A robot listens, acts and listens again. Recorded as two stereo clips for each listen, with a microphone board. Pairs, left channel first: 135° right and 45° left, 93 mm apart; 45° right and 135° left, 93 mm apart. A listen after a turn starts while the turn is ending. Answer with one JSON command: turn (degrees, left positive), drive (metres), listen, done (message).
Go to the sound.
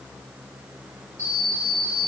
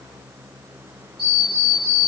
{"turn": -75}
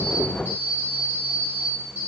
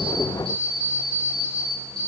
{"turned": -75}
{"turn": -25}
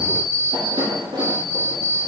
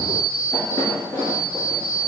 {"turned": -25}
{"turn": 10}
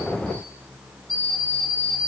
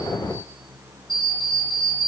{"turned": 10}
{"drive": 1.0}
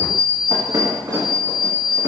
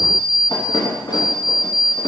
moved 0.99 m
{"drive": 1.0}
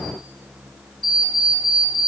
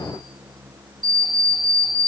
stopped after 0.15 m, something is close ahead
{"done": "Arrived at the alarm clock, straight ahead."}